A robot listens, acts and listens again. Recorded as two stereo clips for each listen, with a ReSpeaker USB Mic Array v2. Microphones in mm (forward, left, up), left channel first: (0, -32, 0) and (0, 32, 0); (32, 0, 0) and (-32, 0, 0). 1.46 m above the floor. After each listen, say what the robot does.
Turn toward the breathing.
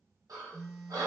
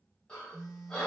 Turn 75° left.
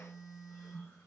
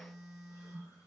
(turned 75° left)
Keep listening.
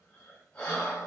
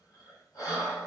Turn 20° right.
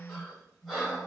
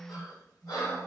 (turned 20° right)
Facing the breathing, 1 to 2 m away.